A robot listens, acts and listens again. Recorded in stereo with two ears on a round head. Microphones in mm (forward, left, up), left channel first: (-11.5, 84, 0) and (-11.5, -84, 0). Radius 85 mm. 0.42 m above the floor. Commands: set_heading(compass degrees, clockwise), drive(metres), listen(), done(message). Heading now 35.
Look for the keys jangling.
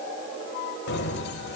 set_heading(335)
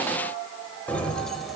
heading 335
done("Facing the keys jangling, 1 to 2 m away.")